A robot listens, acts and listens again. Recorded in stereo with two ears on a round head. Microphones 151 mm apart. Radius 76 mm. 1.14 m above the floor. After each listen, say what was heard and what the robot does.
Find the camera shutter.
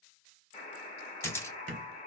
The camera shutter: about 15° left or 165° left. Turn 15° left.
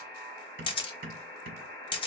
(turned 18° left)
So it is at 150° left. Turn 150° left.
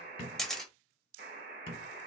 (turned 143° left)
Found it: a camera shutter, straight ahead, under 1 m away.